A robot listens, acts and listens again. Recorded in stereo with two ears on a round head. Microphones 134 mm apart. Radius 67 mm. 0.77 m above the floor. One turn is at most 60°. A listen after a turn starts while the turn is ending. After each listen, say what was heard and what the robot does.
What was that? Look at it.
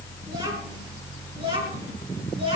The child speaking: about 35° right or 145° right. Turn 35° right.
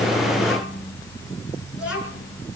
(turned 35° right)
Facing the child speaking.